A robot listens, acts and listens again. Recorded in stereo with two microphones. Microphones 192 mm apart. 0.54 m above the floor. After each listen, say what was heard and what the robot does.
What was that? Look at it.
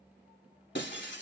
The breaking glass: about 70° left or 110° left. Turn 70° left.
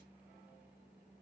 Keep listening.
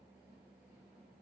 I heard breaking glass, but can't make it out now. It was about straight ahead or 40° left.